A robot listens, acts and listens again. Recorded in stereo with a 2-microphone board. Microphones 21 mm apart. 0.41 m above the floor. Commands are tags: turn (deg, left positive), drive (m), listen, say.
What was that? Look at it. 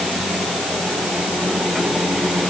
<listen/>
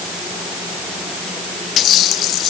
<listen/>
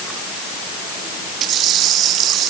<say>I can't make out anything.</say>